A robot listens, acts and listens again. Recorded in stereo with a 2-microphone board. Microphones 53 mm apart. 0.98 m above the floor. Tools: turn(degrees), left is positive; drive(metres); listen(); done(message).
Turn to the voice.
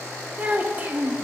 turn(degrees=-30)
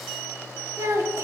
turn(degrees=-120)
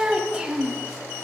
turn(degrees=-15)
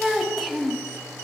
done("Found it: a child speaking, straight ahead.")